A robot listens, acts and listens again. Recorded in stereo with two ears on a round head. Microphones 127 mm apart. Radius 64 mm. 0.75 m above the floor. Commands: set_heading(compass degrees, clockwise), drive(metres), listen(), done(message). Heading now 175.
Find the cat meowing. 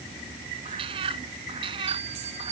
set_heading(215)
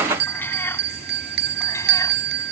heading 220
set_heading(205)
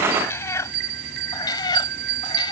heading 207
set_heading(177)
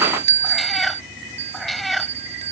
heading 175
done("Found it: a cat meowing, straight ahead.")